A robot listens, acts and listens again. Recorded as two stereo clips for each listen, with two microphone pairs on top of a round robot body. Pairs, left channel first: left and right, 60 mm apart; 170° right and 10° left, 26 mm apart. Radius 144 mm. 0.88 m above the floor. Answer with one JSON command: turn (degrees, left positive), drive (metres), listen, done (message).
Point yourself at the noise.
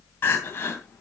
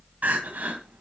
{"turn": 35}
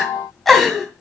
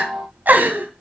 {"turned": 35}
{"done": "Facing the crying."}